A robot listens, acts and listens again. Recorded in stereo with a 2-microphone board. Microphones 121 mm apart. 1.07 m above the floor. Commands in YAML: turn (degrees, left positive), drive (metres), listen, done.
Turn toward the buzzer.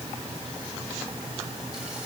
listen: true
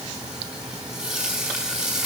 listen: true
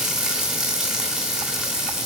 done: "I can't make out a buzzer, only frying."